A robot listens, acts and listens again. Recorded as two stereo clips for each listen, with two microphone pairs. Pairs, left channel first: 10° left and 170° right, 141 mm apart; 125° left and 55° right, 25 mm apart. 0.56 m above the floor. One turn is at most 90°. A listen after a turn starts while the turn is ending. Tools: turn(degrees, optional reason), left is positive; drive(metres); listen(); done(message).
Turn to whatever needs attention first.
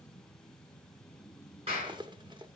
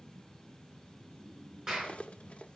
listen()
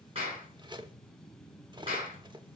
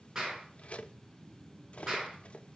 listen()
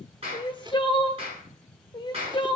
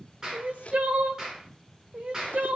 turn(degrees=-40, reason="The crying: 40° right.")
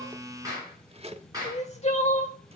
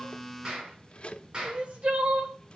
turn(degrees=-25, reason="The crying is now 25° right.")
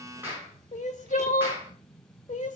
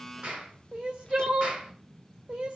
turn(degrees=-15, reason="The crying is now 15° right.")
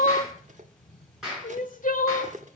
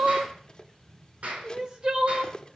done("Found it: crying, straight ahead.")